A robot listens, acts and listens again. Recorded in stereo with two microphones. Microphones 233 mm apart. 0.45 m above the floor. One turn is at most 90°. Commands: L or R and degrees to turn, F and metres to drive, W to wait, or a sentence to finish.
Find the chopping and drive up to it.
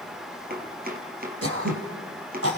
R40
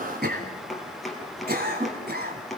F1.0
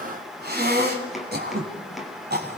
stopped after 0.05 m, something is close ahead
Something is in my way. I am facing the chopping but have not reached it.